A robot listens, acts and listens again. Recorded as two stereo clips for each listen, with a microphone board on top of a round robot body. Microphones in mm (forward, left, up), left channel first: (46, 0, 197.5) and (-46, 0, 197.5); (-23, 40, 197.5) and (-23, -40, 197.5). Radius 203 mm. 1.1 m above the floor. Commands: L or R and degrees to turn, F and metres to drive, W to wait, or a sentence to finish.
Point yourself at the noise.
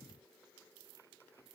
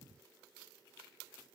W
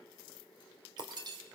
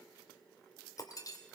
L135
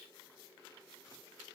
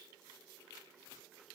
Facing where the breaking glass came from. I can't hear it now.